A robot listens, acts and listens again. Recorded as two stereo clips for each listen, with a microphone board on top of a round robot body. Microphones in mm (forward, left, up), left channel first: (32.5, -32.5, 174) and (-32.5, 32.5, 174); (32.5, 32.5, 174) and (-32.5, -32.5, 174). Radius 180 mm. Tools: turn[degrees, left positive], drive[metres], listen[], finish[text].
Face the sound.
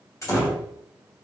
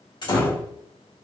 Thought: The door slam: 10° left.
Action: turn[10]
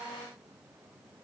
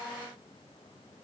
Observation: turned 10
Action: finish[I heard a door slam from this way, but can't make it out now.]